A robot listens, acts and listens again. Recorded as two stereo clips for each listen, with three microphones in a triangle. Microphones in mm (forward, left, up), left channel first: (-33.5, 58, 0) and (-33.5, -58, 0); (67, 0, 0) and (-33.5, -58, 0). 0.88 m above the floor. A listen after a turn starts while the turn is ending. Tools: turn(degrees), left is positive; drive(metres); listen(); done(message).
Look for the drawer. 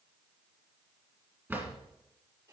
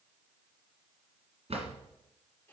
turn(degrees=-160)
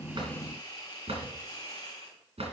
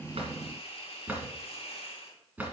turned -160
turn(degrees=-75)
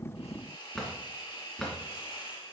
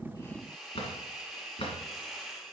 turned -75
done("Facing the drawer, 2 to 4 m away.")